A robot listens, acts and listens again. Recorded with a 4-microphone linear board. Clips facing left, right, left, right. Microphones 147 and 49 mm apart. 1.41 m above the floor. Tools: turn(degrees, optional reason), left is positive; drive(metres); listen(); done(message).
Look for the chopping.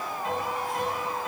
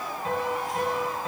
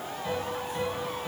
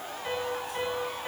listen()
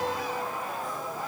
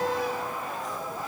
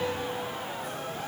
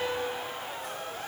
listen()
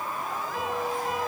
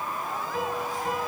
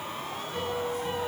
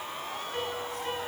done("I can't make out chopping, only a piano.")